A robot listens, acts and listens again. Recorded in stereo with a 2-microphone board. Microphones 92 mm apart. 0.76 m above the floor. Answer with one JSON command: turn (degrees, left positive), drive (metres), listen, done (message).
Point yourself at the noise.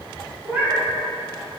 {"turn": -20}
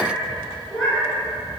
{"turn": 30}
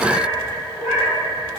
{"turn": -35}
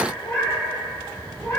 {"turn": 25}
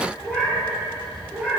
{"turn": -10}
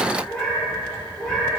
{"done": "Facing the cat meowing."}